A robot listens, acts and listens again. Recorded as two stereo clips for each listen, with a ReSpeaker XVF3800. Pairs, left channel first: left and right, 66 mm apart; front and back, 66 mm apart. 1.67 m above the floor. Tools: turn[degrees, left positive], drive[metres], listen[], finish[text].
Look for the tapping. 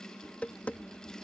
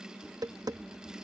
Thought: The tapping: 160° left.
Action: turn[160]
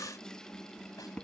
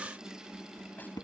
Thought: The tapping is now 15° left.
Action: turn[15]
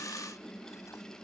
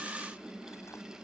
Action: listen[]
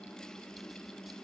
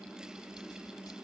Action: listen[]
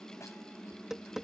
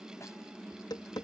Action: finish[Facing the tapping.]